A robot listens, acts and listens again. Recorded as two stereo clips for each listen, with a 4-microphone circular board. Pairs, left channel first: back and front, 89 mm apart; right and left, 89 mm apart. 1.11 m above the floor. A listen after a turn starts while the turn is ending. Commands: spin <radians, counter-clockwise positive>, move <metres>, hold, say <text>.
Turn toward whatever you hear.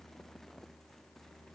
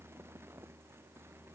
hold
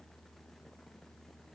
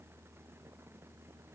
hold
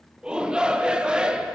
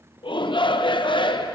spin -1.40
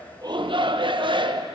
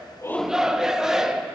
say Found it: a shout, straight ahead.